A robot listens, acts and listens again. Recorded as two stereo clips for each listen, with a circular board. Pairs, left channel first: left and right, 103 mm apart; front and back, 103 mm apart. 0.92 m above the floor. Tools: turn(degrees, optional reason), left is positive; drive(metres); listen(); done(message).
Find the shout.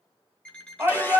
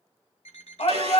turn(degrees=-20, reason="The shout: 20° right.")
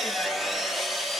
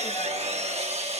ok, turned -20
listen()
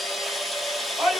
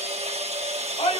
done("Found it: a shout, straight ahead.")